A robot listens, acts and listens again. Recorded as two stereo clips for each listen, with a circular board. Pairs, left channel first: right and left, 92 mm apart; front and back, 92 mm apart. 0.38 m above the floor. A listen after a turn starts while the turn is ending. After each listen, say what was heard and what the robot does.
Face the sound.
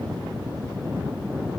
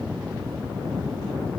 Keep listening.
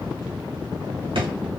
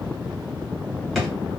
The drawer: 90° left. Turn 90° left.
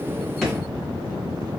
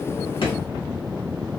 Keep listening.
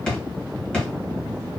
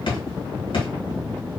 The drawer is now 10° right. Turn 10° right.
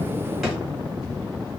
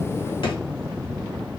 Facing the drawer, 1 to 2 m away.